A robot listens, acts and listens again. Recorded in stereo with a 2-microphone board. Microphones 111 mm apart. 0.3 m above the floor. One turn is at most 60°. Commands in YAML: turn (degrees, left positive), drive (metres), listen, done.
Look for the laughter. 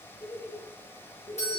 turn: 35
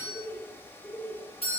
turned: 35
turn: 20
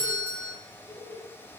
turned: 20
turn: 20
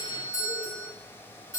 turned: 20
listen: true
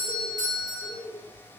turn: 10
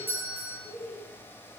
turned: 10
done: "Found it: laughter, straight ahead, over 4 m away."